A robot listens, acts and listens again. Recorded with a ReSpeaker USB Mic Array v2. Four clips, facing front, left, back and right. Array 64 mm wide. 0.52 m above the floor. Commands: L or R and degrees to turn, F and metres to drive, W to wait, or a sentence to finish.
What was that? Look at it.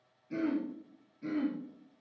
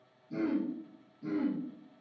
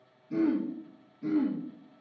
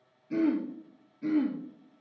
R80
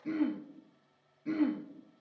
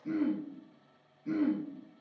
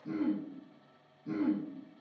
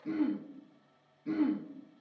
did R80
Facing the throat clearing.